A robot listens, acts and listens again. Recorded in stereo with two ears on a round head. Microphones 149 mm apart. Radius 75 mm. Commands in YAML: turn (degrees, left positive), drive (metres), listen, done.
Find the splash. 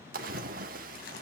turn: -55
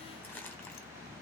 listen: true
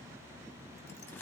done: "I heard a splash, but can't make it out now. It was about straight ahead or 70° right."